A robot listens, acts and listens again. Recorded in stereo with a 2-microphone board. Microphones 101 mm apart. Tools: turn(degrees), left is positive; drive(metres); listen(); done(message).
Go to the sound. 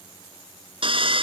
turn(degrees=-65)
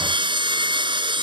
turn(degrees=-55)
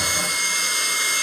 drive(metres=1.0)
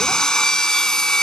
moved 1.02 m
drive(metres=1.0)
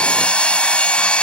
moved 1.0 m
turn(degrees=10)
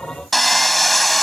drive(metres=1.0)
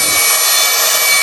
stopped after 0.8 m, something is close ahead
done("Arrived at the sawing, straight ahead.")